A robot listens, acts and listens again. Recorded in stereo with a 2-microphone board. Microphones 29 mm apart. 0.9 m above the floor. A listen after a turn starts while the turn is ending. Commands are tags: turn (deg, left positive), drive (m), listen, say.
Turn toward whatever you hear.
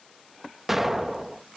<turn deg="-30"/>
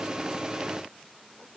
<listen/>
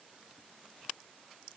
<say>I heard an explosion, but can't make it out now. It was about 20° left or 140° right.</say>